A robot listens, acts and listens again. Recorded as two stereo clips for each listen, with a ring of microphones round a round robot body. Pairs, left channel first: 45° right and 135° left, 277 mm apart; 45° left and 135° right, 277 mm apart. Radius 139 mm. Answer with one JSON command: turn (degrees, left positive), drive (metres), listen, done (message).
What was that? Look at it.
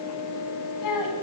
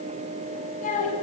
{"turn": -20}
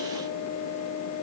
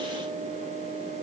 {"listen": true}
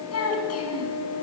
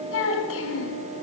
{"done": "Found it: a child speaking, straight ahead."}